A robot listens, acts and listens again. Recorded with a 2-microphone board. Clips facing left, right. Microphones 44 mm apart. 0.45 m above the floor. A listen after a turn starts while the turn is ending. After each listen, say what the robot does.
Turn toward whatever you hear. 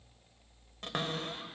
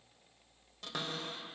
Turn 45° left.
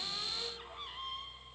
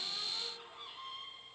Turn 85° left.
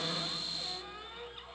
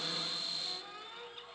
Turn 20° left.
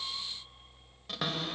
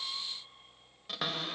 Found it: a cupboard door, straight ahead, 1 to 2 m away.